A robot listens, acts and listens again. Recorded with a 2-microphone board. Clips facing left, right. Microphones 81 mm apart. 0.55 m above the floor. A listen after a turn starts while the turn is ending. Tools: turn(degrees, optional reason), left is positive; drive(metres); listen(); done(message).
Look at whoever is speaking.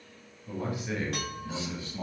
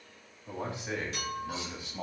turn(degrees=-20, reason="The man speaking: about 20° right or 160° right.")
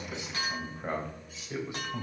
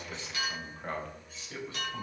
turn(degrees=20, reason="So it is at 20° left.")
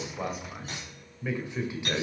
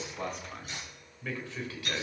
turn(degrees=25, reason="The man speaking is now 25° left.")
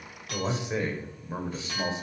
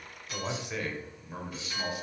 turn(degrees=25, reason="The man speaking is now 25° left.")
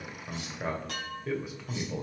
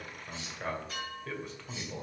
turn(degrees=10, reason="The man speaking is now 10° left.")
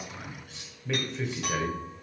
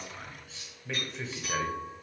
done("Found it: a man speaking, straight ahead.")